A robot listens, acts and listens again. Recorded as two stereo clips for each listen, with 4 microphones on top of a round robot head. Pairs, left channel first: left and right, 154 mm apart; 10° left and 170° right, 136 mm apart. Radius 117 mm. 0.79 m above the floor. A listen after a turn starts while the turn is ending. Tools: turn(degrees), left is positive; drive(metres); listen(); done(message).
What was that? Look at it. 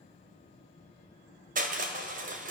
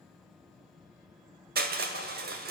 turn(degrees=-140)
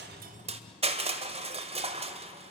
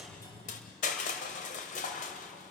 turn(degrees=-40)
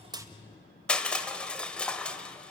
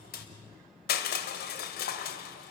done("Found it: crushing, straight ahead, 1 to 2 m away.")